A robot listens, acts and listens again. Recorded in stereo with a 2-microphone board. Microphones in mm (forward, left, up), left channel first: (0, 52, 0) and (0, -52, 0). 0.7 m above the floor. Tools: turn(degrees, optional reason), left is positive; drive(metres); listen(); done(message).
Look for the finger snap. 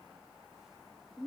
listen()
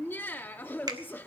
turn(degrees=-45, reason="The finger snap: about 45° right or 135° right.")
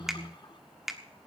done("Facing the finger snap, 1 to 2 m away.")